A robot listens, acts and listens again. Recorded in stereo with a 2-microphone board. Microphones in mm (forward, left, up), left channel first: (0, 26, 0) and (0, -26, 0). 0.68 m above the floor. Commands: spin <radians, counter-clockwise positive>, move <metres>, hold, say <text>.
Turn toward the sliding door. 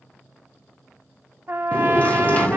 spin 0.52
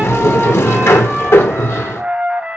spin 2.09
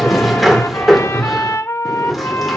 say Facing the sliding door.